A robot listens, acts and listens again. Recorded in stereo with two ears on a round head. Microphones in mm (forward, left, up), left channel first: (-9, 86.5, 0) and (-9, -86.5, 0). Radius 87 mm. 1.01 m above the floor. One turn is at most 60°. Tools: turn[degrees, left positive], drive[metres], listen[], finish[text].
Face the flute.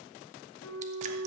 Thought: The flute: about 20° left or 160° left.
Action: turn[20]
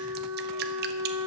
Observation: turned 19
Action: finish[Found it: a flute, straight ahead.]